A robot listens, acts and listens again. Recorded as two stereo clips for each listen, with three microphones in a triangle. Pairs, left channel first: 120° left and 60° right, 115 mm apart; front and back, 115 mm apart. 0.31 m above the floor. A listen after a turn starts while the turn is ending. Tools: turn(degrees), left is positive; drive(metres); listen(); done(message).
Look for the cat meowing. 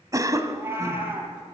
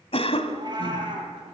turn(degrees=-130)
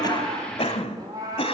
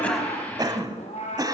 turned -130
done("Facing the cat meowing.")